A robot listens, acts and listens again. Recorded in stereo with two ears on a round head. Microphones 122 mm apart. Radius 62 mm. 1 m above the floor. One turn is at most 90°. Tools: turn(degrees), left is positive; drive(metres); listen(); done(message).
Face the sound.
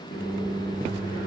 turn(degrees=65)
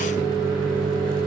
turn(degrees=10)
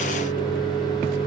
done("Facing the microwave.")